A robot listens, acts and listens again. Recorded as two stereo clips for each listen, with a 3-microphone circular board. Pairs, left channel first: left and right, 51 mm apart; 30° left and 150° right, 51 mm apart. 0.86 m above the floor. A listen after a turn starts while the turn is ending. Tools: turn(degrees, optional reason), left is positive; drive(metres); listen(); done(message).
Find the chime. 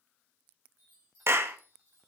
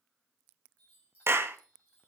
turn(degrees=-35, reason="The chime: 35° right.")
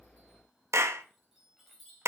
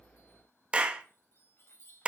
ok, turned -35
done("Facing the chime, over 4 m away.")